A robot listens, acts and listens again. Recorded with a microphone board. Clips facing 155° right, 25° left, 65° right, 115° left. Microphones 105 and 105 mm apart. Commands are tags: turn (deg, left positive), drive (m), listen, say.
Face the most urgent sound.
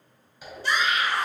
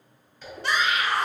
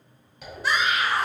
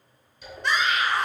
<turn deg="20"/>
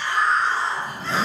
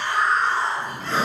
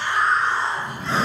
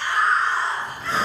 <say>Found it: a scream, straight ahead.</say>